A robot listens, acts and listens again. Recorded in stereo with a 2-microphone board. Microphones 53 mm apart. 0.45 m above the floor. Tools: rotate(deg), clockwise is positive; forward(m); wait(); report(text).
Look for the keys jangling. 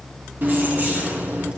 rotate(40)
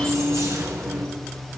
rotate(105)
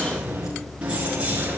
rotate(25)
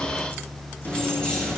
rotate(-15)
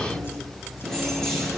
report("Found it: keys jangling, straight ahead, over 4 m away.")